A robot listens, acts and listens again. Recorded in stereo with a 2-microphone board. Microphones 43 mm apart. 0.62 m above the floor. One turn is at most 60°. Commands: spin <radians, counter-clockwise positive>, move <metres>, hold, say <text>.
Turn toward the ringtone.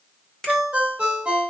spin -0.52
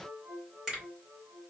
hold
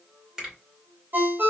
spin -1.05
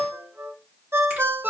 spin -1.05
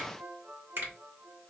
spin -0.52
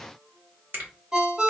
spin -0.44
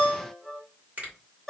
say Facing the ringtone, under 1 m away.